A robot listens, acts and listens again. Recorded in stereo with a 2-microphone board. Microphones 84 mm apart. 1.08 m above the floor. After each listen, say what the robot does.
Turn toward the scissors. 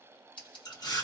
Turn 75° left.
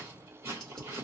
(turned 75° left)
Keep listening.
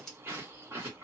Turn 10° left.
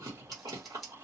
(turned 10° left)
Facing the scissors.